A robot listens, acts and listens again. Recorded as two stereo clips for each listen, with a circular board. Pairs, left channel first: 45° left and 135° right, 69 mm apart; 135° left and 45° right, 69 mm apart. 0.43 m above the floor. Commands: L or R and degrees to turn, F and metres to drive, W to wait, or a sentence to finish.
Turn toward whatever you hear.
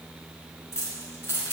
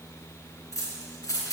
L100
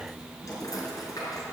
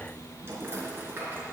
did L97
L15
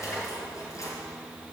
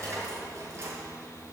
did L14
Facing the keys jangling, over 4 m away.